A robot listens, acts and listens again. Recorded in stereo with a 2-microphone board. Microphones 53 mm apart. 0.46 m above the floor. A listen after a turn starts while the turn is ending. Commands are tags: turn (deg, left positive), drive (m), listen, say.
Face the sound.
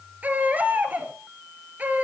<turn deg="-35"/>
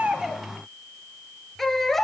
<say>Facing the baby crying, 2 to 4 m away.</say>